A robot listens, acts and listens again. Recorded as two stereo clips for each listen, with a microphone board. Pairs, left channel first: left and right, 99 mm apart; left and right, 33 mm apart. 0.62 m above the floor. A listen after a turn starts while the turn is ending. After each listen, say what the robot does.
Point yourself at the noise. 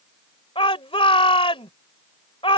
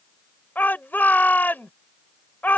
Turn 70° left.
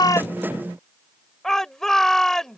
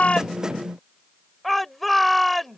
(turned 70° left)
Facing the shout.